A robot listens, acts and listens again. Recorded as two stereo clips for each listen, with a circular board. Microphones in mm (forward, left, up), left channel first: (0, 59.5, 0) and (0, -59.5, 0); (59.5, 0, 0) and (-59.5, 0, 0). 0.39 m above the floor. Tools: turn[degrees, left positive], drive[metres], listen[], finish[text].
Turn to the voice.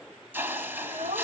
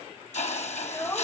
Thought: The child speaking: 65° right.
Action: turn[-65]
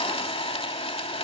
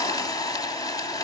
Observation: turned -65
Action: listen[]
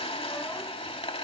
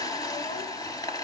Action: listen[]
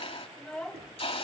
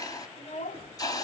Thought: The child speaking is now 10° left.
Action: turn[10]
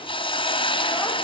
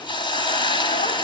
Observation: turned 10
Action: listen[]
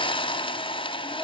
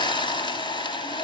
Action: listen[]
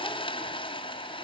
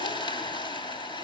Action: finish[Facing where the child speaking came from. I can't hear it now.]